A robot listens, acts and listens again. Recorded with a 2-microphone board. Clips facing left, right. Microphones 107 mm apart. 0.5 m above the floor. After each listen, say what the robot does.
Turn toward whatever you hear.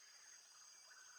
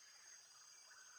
Keep listening.
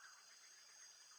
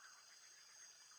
Keep listening.
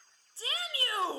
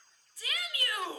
Turn 35° left.
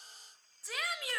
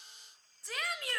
Facing the shout, 1 to 2 m away.